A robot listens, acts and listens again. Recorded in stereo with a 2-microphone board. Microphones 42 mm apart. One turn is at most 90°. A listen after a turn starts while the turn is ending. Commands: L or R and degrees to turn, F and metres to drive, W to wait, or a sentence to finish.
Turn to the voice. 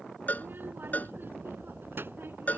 R60
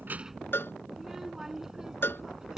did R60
R15
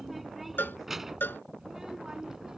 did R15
R15
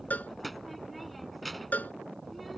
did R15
Found it: a child speaking, straight ahead.